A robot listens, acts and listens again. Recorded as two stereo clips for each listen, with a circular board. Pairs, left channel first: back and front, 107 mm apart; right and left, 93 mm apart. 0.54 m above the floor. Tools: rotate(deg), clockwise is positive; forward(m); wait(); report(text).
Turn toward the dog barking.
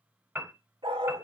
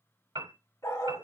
rotate(35)
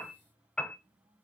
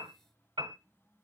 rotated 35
wait()
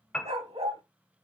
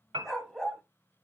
report("Found it: a dog barking, straight ahead.")